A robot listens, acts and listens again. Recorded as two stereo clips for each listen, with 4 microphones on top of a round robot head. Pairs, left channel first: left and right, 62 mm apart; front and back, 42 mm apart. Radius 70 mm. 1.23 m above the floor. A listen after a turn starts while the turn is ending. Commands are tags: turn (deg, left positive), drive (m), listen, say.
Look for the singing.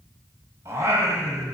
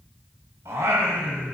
<turn deg="-140"/>
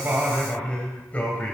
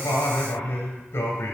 <turn deg="25"/>
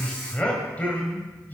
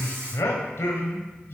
<turn deg="30"/>
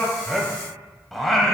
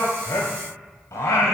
<say>Found it: singing, straight ahead, 2 to 4 m away.</say>